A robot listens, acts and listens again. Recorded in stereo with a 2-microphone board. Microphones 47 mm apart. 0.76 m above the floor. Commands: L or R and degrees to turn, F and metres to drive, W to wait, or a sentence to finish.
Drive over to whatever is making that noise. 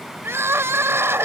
R75
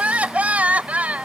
R35
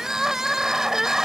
R15
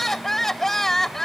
F1.0
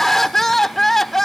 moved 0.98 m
F1.0
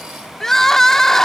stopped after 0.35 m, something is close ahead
L10
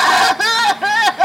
I am next to the crying.